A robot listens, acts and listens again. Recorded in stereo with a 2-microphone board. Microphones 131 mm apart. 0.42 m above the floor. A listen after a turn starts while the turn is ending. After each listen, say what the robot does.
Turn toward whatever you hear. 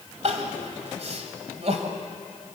Turn 55° right.
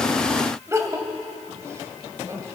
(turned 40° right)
Turn 25° right.
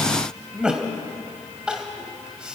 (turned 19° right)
Turn 10° right.
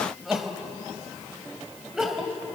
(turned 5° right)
Facing the crying, 1 to 2 m away.